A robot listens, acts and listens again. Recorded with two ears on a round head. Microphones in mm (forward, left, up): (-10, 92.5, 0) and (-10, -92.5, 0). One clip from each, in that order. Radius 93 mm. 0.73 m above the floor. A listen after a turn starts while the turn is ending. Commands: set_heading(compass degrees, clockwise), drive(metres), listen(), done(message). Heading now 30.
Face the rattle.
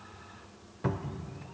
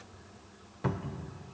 listen()
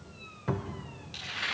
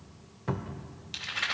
set_heading(70)
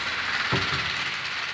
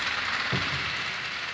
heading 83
set_heading(68)
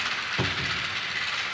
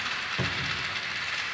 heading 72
done("Facing the rattle, 2 to 4 m away.")